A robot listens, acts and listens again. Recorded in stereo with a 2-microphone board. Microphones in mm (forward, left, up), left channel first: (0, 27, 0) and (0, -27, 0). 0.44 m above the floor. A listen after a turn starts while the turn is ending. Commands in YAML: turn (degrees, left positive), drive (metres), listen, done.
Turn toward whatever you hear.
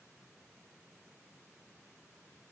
listen: true
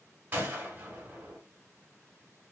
turn: -35
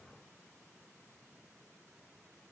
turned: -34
listen: true
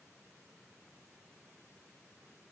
done: "I heard a gunshot, but can't make it out now. It was about straight ahead or 110° right."